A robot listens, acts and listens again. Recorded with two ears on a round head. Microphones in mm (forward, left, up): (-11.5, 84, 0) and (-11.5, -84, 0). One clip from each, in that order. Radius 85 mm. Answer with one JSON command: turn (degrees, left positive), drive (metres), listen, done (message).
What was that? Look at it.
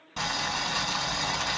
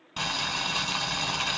{"turn": -30}
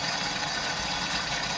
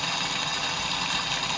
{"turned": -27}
{"turn": -145}
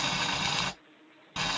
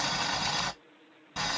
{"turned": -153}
{"done": "Facing the boiling."}